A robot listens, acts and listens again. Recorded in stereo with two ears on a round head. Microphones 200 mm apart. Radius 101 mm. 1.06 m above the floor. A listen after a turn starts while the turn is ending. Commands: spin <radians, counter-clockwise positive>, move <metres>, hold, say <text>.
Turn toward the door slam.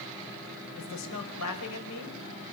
hold
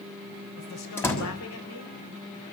spin 0.52
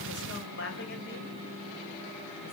hold
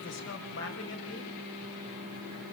say I heard a door slam, but can't make it out now. It was about 20° right or 140° left.